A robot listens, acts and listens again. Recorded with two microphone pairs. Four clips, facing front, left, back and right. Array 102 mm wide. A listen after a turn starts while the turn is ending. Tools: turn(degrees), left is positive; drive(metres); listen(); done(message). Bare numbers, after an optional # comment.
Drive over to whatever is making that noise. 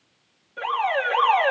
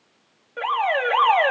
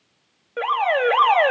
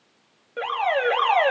# The alarm: 175° left.
turn(175)
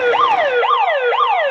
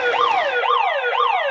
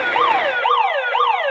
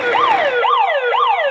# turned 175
# The alarm is now 20° right.
turn(-20)
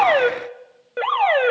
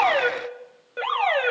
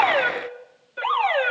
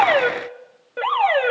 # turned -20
drive(1.0)
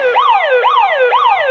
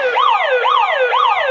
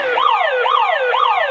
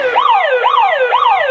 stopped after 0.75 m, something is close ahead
done("I am next to the alarm.")